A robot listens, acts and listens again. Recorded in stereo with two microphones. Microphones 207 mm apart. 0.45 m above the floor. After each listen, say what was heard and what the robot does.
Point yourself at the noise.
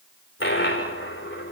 The dropped coin: about 70° left or 110° left. Turn 70° left.
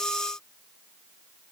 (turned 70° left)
Keep listening.
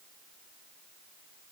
I heard a dropped coin, but can't make it out now. It was about straight ahead or 40° left.